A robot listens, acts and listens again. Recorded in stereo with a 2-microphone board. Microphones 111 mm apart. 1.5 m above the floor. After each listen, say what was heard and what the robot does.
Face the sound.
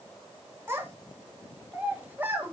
The child speaking: about 15° right or 165° right. Turn 15° right.
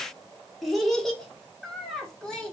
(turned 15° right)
Turn 30° left.
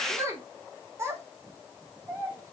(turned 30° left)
So it is at 25° right. Turn 25° right.
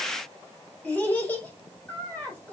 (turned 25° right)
The child speaking is now 15° left. Turn 15° left.
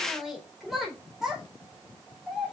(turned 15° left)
Facing the child speaking.